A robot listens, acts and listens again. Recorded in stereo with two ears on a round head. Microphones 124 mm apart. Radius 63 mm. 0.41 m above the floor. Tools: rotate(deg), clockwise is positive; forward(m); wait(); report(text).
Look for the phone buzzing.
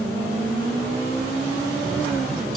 wait()
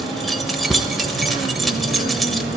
wait()
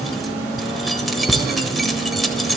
report("I can't make out a phone buzzing to turn to.")